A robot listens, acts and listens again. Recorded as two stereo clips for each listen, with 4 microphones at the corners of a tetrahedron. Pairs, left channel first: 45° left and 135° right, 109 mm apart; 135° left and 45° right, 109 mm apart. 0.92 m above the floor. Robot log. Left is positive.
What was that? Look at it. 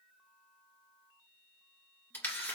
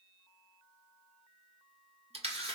note: The camera shutter: 25° right.
cmd yaw -25
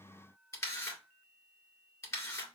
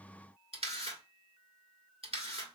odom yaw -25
note: The camera shutter is now 15° right.
cmd yaw -15
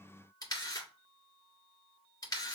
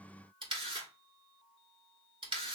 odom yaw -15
end: Found it: a camera shutter, straight ahead.